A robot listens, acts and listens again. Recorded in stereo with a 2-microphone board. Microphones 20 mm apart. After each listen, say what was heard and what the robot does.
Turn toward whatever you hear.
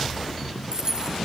The keys jangling: about 35° right or 145° right. Turn 35° right.
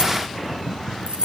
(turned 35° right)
So it is at 115° right. Turn 115° right.
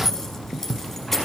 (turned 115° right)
The keys jangling is now 15° left. Turn 15° left.
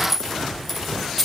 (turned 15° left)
Found it: keys jangling, straight ahead.